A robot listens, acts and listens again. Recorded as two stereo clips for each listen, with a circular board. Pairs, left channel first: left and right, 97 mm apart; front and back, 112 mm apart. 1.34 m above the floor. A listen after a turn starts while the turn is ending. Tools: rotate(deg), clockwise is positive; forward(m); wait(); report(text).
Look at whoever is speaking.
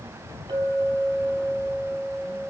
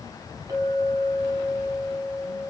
wait()
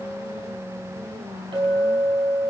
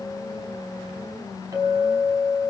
wait()
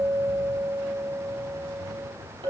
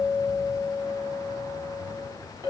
report("I can't make out anyone speaking to turn to.")